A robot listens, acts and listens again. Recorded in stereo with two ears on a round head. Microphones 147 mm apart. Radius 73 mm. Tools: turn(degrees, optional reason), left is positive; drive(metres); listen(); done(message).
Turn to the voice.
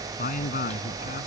turn(degrees=55, reason="The man speaking: about 55° left or 125° left.")
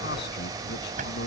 listen()
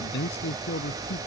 turn(degrees=70, reason="So it is at 70° left.")
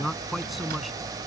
done("Found it: a man speaking, straight ahead.")